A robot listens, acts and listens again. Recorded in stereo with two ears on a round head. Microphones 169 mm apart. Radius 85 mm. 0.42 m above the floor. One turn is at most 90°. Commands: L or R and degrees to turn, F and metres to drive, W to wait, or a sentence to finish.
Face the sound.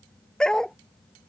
L30
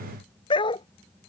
L90
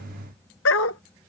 L80
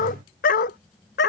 L55
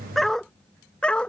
Found it: a dog barking, straight ahead.